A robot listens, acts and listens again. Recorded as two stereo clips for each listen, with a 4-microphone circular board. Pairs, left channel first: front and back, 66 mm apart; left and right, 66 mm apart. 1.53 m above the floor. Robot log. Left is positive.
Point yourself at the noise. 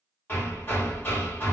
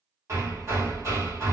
note: The hammering: 55° right.
cmd yaw -55
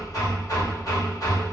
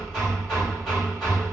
end: Found it: hammering, straight ahead.